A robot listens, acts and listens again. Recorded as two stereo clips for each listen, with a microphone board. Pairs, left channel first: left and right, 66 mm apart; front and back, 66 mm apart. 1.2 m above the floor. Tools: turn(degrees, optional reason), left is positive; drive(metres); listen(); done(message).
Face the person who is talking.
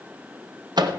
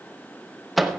listen()
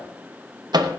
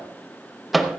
listen()
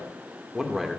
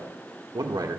turn(degrees=180, reason="The man speaking: straight behind.")
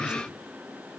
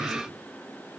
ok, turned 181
turn(degrees=-15, reason="The man speaking is now 15° right.")
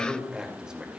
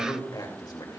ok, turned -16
turn(degrees=-15, reason="The man speaking is now 15° right.")
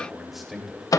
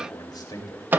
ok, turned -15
done("Facing the man speaking.")